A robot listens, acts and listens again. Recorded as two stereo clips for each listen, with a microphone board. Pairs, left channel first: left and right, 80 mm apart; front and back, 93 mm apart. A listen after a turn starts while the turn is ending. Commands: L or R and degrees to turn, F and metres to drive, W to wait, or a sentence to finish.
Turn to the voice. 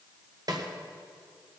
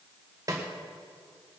W
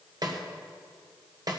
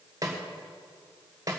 W
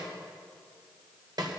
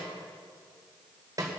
I can't make out anyone speaking, only a snare drum.